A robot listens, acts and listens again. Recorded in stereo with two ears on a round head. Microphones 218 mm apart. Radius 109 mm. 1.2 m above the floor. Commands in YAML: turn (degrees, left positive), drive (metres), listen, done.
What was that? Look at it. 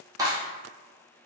turn: -30
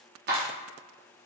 turn: -140
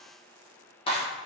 turn: 25
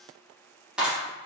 done: "Found it: a clap, straight ahead."